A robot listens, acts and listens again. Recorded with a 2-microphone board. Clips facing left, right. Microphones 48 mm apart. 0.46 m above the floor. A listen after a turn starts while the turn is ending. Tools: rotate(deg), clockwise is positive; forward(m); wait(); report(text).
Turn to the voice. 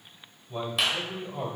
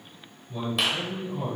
rotate(-60)
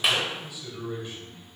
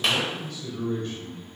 rotate(-10)
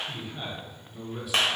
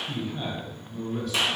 report("Found it: a man speaking, straight ahead.")